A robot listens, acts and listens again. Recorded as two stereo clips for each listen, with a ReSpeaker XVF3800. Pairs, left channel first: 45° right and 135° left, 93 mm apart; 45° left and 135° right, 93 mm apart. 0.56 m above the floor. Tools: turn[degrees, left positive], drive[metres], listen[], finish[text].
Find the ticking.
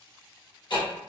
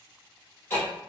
Thought: The ticking: 20° right.
Action: turn[-20]
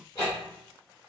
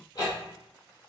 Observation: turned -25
Action: finish[Found it: ticking, straight ahead, 2 to 4 m away.]